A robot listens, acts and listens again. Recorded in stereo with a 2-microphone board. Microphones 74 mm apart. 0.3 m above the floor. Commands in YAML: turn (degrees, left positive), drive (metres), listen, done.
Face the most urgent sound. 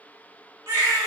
turn: -40
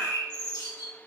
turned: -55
listen: true
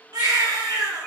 turn: -80
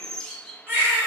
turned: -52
turn: -30
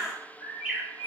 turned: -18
turn: -10
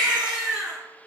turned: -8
done: "Facing the baby crying."